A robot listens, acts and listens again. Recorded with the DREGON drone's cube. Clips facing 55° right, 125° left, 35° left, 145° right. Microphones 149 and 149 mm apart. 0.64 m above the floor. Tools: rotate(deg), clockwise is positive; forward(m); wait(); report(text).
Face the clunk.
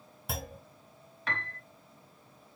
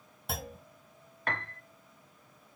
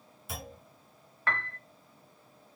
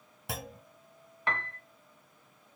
rotate(145)
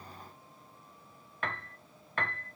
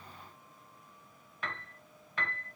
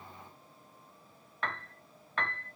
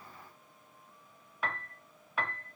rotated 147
report("I heard a clunk from this way, but can't make it out now.")